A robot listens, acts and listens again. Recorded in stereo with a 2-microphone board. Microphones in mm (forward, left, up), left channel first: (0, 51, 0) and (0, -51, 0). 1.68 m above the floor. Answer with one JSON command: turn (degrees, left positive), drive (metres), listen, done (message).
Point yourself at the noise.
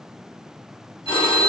{"turn": 55}
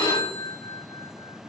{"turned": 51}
{"turn": 60}
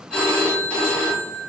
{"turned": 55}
{"turn": 10}
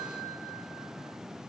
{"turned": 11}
{"listen": true}
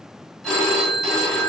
{"done": "Facing the phone ringing, 1 to 2 m away."}